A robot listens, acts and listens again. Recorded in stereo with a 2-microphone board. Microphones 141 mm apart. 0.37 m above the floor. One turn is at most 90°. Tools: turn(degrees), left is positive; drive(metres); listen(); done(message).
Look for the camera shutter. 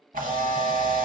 turn(degrees=-90)
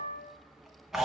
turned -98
done("Found it: a camera shutter, straight ahead, under 1 m away.")